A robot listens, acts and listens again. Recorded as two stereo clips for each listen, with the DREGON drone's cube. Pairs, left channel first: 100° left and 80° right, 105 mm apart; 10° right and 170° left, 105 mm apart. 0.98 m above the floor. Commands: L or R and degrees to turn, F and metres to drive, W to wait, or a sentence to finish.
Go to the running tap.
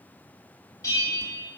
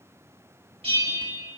W
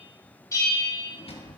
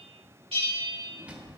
W
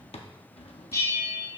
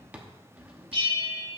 I can't make out a running tap to turn to.